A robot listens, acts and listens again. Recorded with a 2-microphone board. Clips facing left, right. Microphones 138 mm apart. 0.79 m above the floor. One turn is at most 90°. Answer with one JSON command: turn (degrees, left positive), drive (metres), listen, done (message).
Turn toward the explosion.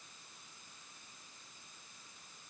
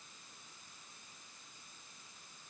{"listen": true}
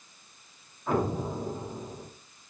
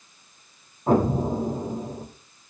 {"turn": -40}
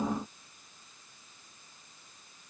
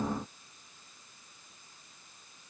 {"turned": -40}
{"listen": true}
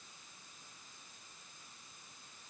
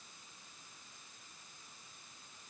{"done": "I heard an explosion, but can't make it out now. It was about straight ahead or 100° right."}